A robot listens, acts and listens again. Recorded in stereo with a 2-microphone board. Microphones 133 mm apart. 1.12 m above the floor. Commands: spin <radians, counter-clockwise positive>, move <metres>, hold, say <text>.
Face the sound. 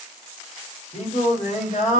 spin 1.13
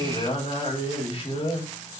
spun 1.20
spin 0.79
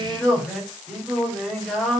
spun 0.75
say Facing the singing, over 4 m away.